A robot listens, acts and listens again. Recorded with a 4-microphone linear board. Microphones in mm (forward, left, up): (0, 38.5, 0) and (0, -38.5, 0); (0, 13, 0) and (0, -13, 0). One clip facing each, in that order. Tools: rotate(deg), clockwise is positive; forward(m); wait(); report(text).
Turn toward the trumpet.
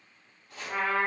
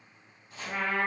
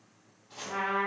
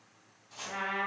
rotate(-30)
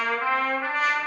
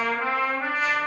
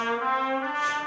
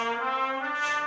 rotate(20)
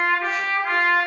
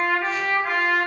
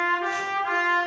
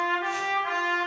report("Found it: a trumpet, straight ahead.")